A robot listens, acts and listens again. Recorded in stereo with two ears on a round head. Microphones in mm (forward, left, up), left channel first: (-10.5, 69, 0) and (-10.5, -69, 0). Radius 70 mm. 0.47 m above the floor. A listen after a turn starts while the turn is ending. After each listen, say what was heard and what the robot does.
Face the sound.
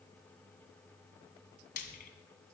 The frying: about 60° left or 120° left. Turn 60° left.
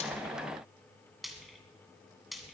Facing the frying.